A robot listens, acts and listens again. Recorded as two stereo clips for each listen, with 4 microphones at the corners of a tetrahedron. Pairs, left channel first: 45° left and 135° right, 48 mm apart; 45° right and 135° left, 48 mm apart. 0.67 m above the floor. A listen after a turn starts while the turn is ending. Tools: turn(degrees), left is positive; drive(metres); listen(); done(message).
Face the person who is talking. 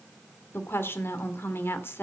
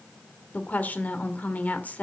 turn(degrees=10)
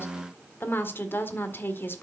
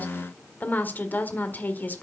done("Facing the woman speaking.")